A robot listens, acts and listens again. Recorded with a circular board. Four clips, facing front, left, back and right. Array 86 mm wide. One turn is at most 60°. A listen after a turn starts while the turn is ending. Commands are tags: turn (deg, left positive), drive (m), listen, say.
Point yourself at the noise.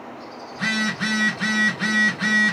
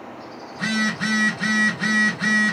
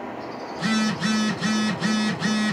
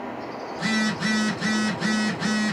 <turn deg="25"/>
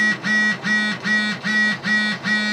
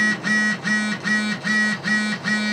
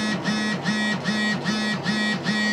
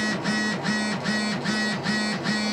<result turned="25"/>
<turn deg="15"/>
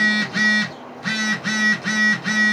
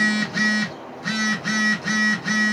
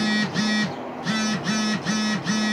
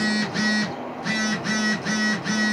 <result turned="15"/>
<say>Facing the phone buzzing.</say>